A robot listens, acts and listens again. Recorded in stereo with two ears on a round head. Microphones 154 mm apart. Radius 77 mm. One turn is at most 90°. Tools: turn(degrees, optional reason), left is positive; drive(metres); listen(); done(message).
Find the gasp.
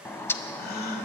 turn(degrees=60, reason="The gasp: about 60° left or 120° left.")
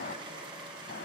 listen()
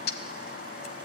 done("I heard a gasp, but can't make it out now. It was about straight ahead or 60° left.")